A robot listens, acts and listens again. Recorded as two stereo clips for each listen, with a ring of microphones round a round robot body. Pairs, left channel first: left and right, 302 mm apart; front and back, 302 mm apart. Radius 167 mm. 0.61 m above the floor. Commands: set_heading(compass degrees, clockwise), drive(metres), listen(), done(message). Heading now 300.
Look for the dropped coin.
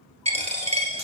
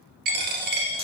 set_heading(100)
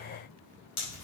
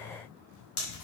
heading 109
set_heading(99)
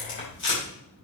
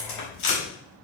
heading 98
done("Facing where the dropped coin came from. I can't hear it now.")